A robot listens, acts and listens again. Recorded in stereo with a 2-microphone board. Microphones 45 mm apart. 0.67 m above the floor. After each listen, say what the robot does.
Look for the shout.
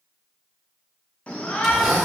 Turn 30° left.
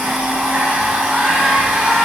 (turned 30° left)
Keep listening.
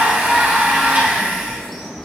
Found it: a shout, straight ahead.